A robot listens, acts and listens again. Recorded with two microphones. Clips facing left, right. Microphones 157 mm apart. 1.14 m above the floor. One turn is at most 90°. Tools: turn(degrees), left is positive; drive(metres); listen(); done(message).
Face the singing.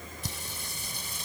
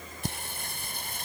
turn(degrees=-60)
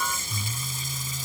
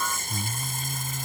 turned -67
turn(degrees=-60)
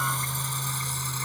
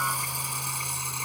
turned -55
turn(degrees=-15)
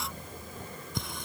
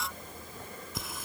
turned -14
done("Found it: singing, straight ahead.")